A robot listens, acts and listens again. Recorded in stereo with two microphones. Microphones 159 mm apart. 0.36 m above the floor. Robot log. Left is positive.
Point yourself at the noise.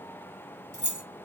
note: The keys jangling: about 20° right or 160° right.
cmd yaw -20
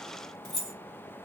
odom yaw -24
end: Facing the keys jangling.